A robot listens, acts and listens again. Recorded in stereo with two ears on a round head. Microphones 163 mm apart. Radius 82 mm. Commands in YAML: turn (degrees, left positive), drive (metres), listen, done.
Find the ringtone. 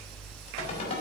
turn: 35
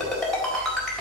done: "Found it: a ringtone, straight ahead, over 4 m away."